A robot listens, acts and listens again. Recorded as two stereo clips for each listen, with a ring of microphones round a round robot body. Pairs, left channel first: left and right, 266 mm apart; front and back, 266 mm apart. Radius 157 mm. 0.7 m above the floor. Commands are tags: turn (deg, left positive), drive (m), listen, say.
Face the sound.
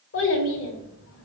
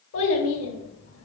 <turn deg="45"/>
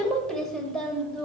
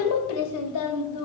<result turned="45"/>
<say>Facing the child speaking.</say>